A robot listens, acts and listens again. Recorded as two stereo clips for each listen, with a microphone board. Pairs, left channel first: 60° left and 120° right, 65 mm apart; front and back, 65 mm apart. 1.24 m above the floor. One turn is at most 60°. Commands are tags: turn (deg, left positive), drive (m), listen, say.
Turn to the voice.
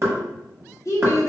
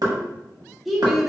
<turn deg="60"/>
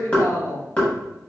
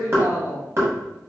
<turn deg="30"/>
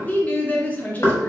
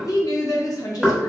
<say>Facing the woman speaking.</say>